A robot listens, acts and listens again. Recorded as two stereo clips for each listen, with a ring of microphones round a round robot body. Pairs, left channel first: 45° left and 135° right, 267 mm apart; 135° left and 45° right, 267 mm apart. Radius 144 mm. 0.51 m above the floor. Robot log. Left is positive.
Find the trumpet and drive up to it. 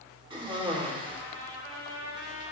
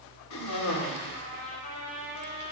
note: The trumpet: 170° right.
cmd yaw -170
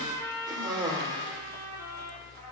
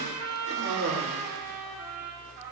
note: The trumpet is now 30° right.
cmd yaw -30
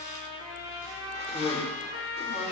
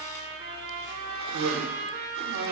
note: The trumpet is now 15° left.
cmd yaw +15
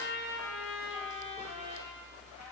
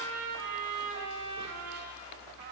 cmd fwd 1.0
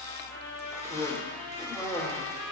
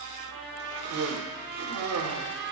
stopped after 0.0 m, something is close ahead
end: Blocked. The trumpet is further on, straight ahead.